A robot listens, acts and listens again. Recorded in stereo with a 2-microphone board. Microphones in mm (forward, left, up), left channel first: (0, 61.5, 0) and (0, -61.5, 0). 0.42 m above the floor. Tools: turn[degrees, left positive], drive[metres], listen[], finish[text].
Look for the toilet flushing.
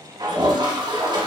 Thought: The toilet flushing: about 40° right or 140° right.
Action: turn[-40]
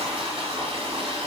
Thought: So it is at 90° right.
Action: turn[-90]
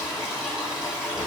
Thought: The toilet flushing is now 10° right.
Action: turn[-10]
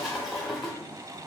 Action: finish[Facing the toilet flushing, under 1 m away.]